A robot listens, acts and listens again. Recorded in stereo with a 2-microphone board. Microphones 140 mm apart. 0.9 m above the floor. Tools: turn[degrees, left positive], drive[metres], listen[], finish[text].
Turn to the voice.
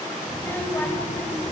Action: turn[30]
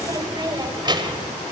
Thought: So it is at 35° right.
Action: turn[-35]
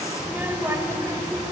Thought: The child speaking is now 25° right.
Action: turn[-25]
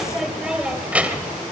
Thought: The child speaking is now 10° right.
Action: turn[-10]
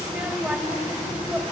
Thought: The child speaking is now 10° right.
Action: turn[-10]
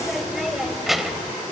Action: finish[Found it: a child speaking, straight ahead.]